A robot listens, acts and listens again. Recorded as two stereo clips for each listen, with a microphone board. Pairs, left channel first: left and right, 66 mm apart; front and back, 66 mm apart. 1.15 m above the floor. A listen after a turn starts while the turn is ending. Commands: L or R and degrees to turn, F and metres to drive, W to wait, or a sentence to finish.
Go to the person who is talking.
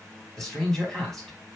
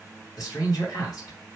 L10
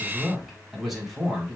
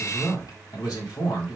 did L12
F1.0
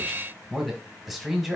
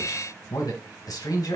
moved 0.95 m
F1.0
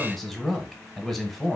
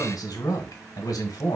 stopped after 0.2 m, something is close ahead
Arrived at the man speaking, straight ahead.